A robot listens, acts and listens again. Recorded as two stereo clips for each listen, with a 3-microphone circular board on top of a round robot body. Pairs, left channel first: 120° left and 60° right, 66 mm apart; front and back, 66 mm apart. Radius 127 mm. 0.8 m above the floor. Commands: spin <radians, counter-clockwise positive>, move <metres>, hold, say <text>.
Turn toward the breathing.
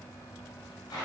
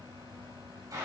hold
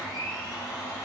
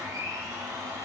hold
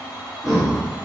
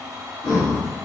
spin 0.52
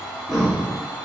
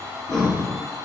spin 0.44
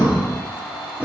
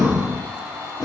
spin 0.17
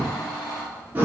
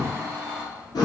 say Found it: breathing, straight ahead, 2 to 4 m away.